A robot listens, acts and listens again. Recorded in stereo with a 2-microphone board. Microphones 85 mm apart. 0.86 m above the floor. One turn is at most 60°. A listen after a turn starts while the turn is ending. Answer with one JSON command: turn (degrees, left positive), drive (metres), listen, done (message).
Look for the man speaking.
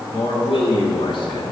{"turn": 60}
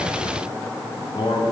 {"turn": 60}
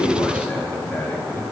{"turn": 20}
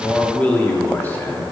{"turn": 25}
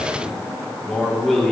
{"done": "Found it: a man speaking, straight ahead."}